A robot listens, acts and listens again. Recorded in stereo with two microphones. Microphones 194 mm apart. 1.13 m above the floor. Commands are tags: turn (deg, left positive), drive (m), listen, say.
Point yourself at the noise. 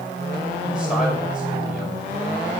<listen/>
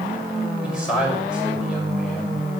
<turn deg="-30"/>
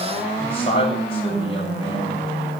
<turn deg="30"/>
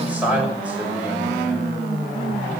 <say>Found it: a man speaking, straight ahead, over 4 m away.</say>